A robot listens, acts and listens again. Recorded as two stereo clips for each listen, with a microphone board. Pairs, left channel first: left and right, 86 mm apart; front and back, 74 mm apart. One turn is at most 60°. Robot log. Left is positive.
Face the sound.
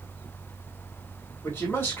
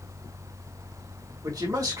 note: The man speaking: 150° left.
cmd yaw +60
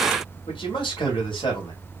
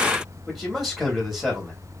note: The man speaking is now 90° left.
cmd yaw +60
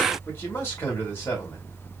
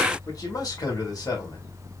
note: The man speaking is now 30° left.
cmd yaw +30
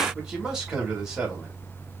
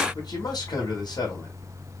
end: Facing the man speaking, 2 to 4 m away.